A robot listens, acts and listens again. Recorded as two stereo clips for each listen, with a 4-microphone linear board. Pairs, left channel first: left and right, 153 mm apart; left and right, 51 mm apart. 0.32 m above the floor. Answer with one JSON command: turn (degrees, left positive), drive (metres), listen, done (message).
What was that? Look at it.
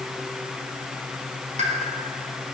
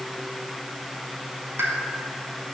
{"turn": -50}
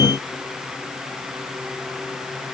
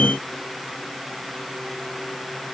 {"listen": true}
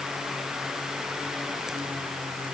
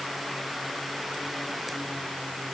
{"done": "I heard a pop, but can't make it out now. It was about straight ahead or 80° right."}